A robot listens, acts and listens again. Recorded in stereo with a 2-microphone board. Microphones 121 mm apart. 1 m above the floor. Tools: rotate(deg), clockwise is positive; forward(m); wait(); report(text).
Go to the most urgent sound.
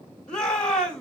rotate(-30)
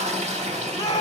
rotate(-145)
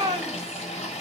rotate(35)
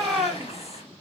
forward(1.0)
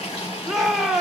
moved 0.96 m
forward(1.0)
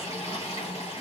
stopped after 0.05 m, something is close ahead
wait()
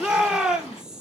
rotate(10)
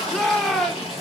report("I am next to the shout.")